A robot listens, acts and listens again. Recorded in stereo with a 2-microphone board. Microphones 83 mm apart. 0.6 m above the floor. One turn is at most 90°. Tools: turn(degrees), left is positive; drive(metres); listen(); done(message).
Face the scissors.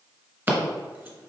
turn(degrees=-30)
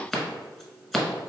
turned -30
done("Found it: scissors, straight ahead, 1 to 2 m away.")